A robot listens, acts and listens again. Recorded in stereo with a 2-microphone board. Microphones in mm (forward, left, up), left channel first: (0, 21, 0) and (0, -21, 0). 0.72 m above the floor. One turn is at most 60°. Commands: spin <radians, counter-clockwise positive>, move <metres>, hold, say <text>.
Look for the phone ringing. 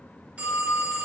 spin -0.61
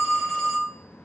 say Found it: a phone ringing, straight ahead, 1 to 2 m away.